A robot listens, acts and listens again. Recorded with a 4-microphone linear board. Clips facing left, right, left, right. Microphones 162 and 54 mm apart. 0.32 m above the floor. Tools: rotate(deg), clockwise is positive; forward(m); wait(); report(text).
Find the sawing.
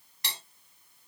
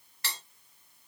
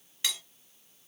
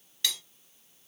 wait()
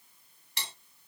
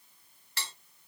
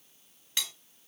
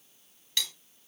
wait()
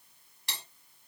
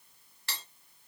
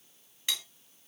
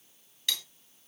report("I can't make out sawing, only cutlery clinking.")